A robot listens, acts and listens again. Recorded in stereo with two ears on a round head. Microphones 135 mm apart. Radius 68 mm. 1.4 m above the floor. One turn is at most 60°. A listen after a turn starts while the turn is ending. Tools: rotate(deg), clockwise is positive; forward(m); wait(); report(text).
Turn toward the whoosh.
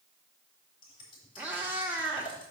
wait()
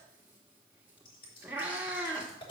wait()
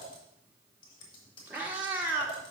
report("I can't make out a whoosh, only scissors and a cat meowing.")